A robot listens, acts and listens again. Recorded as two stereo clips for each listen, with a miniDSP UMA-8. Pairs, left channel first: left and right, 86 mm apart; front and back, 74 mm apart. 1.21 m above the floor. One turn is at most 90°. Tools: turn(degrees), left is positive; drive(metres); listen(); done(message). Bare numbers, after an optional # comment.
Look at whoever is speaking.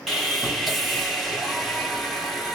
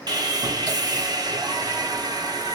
listen()
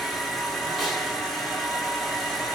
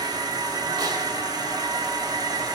listen()
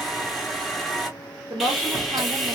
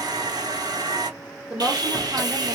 # The woman speaking: 110° right.
turn(-90)
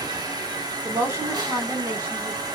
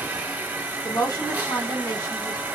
# The woman speaking is now 45° right.
turn(-45)
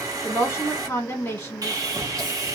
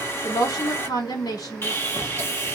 # The woman speaking is now 20° left.
turn(20)
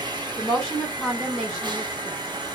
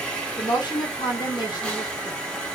done("Facing the woman speaking, 1 to 2 m away.")